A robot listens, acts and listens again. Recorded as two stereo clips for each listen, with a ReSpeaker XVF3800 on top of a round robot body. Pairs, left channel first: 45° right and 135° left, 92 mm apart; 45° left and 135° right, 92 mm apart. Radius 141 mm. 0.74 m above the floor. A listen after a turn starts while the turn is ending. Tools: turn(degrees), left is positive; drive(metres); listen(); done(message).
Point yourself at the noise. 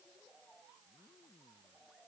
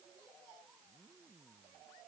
listen()
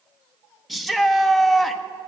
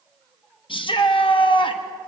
turn(degrees=45)
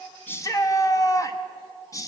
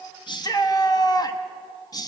done("Found it: a shout, straight ahead.")